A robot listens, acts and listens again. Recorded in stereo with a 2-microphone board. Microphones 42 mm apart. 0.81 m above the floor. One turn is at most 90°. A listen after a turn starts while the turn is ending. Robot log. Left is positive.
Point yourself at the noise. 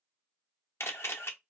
cmd yaw +90
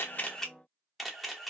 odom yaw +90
end: Found it: a camera shutter, straight ahead.